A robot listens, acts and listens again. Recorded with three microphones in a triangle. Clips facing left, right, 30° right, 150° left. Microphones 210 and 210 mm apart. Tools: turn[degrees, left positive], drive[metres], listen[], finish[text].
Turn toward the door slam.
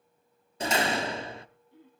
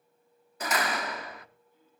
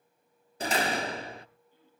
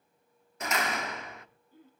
Thought: The door slam: 25° left.
Action: turn[25]
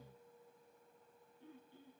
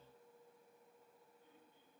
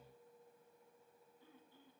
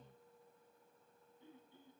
Action: finish[I heard a door slam from this way, but can't make it out now.]